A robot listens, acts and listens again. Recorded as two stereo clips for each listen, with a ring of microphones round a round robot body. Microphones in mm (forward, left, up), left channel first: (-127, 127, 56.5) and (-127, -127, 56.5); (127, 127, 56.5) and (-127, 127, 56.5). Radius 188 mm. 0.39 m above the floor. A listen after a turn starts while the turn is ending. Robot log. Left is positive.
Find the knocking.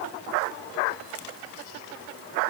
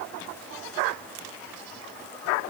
cmd idle
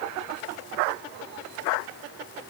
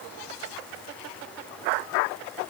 cmd idle
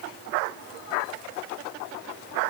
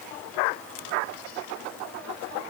end: I can't make out knocking to turn to.